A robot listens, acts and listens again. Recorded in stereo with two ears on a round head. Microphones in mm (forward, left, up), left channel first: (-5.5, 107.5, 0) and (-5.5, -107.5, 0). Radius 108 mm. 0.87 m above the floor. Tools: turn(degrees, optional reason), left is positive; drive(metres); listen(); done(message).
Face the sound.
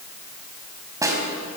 turn(degrees=-30)
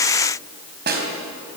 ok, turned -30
turn(degrees=-135, reason="So it is at 135° right.")
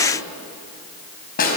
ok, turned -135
turn(degrees=40, reason="The snare drum is now 40° left.")
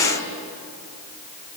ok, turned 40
listen()
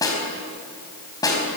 turn(degrees=15, reason="The snare drum is now 15° left.")
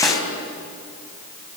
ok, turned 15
listen()
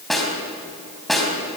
done("Facing the snare drum, over 4 m away.")